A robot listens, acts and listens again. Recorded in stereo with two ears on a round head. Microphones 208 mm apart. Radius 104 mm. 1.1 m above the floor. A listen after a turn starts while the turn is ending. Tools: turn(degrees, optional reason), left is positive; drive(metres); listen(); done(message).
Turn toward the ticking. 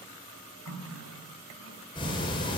turn(degrees=25, reason="The ticking: about 25° left or 155° left.")
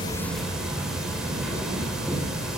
done("Facing the ticking, over 4 m away.")